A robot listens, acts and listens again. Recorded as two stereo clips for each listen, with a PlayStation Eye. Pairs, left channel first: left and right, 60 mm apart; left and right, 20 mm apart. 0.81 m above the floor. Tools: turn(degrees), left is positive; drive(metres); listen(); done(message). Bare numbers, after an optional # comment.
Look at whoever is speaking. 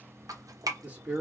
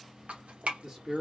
# The man speaking: about 20° right or 160° right.
turn(-20)
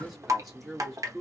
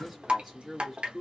done("Found it: a man speaking, straight ahead.")